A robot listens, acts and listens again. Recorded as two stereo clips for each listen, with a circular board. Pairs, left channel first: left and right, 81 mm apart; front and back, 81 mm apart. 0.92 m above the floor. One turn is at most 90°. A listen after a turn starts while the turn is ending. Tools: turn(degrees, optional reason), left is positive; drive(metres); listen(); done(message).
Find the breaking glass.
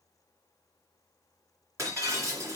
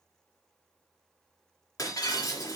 turn(degrees=-40, reason="The breaking glass: 40° right.")
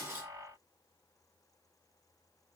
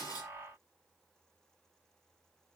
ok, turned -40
done("Facing where the breaking glass came from. I can't hear it now.")